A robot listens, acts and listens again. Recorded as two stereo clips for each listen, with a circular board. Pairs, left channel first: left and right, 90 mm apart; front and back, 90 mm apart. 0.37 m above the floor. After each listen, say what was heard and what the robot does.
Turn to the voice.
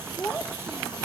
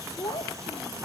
The child speaking: 20° left. Turn 20° left.
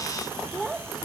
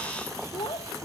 Found it: a child speaking, straight ahead.